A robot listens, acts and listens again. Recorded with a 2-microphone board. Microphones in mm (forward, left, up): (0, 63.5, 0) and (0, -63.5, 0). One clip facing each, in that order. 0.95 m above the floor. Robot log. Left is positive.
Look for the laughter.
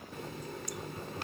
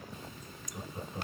note: The laughter: about 25° right or 155° right.
cmd yaw -25
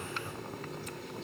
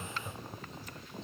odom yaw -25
end: Facing the laughter.